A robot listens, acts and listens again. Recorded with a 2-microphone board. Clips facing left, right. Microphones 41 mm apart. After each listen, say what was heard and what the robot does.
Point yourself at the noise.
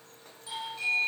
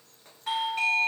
The doorbell: about 60° right or 120° right. Turn 60° right.
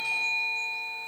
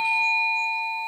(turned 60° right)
So it is at 30° right. Turn 30° right.
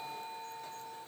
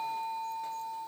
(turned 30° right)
Facing the doorbell, 2 to 4 m away.